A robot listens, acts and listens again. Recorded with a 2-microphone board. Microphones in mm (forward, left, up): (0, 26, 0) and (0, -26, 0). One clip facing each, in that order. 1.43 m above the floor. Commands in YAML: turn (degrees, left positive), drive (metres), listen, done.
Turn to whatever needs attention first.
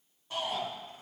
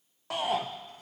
turn: -90
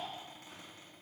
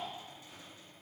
listen: true
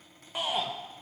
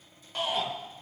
turn: 10
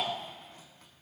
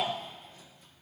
done: "Found it: a shout, straight ahead."